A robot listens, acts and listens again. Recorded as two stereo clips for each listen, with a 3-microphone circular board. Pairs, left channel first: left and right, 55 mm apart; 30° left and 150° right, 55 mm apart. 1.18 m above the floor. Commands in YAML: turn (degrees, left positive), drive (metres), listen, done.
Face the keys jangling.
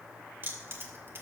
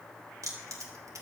turn: -130
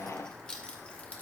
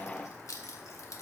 turn: 25
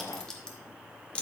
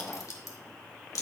turn: 25
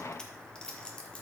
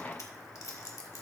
turn: 25
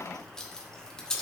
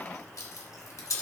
turn: 15
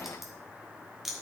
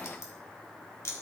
done: "Facing the keys jangling, 1 to 2 m away."